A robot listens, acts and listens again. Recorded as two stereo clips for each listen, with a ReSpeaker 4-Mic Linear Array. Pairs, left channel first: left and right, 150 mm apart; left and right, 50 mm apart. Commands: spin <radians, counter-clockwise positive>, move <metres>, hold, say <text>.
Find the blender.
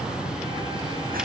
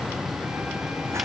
hold
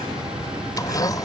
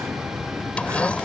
spin 0.44
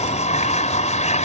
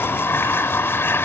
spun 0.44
spin 2.27
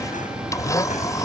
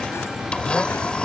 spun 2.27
spin 0.35
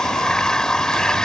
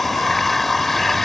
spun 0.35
say Found it: a blender, straight ahead.